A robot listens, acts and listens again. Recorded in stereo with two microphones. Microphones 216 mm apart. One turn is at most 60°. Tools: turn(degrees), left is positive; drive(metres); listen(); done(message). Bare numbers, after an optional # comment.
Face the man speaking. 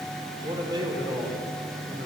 # The man speaking: about 20° right or 160° right.
turn(-20)
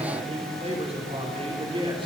# The man speaking: about 25° right or 155° right.
turn(-25)
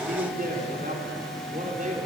# So it is at 145° right.
turn(-60)
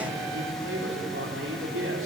# The man speaking is now 75° right.
turn(-60)
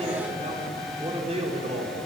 # The man speaking is now 25° right.
turn(-25)
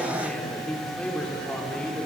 done("Facing the man speaking, over 4 m away.")